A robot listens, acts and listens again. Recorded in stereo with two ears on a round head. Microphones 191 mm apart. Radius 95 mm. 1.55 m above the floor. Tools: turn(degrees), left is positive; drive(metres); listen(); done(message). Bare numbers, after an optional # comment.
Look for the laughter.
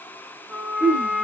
# The laughter: about 35° left or 145° left.
turn(35)
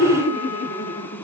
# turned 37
# So it is at 125° left.
turn(125)
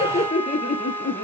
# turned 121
# The laughter is now 55° left.
turn(55)
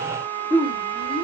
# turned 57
# The laughter is now 25° left.
turn(25)
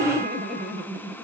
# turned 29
done("Found it: laughter, straight ahead, 1 to 2 m away.")